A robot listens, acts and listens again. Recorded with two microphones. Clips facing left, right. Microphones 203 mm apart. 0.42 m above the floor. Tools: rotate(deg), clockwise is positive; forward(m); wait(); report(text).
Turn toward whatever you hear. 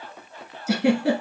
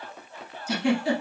rotate(-70)
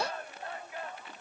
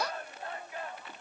wait()
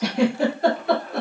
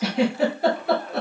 report("Found it: a giggle, straight ahead.")